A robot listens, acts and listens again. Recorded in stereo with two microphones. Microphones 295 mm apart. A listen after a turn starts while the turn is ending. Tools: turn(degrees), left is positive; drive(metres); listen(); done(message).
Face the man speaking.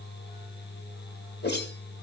listen()
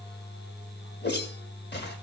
listen()
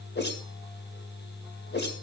done("I can't make out a man speaking to turn to.")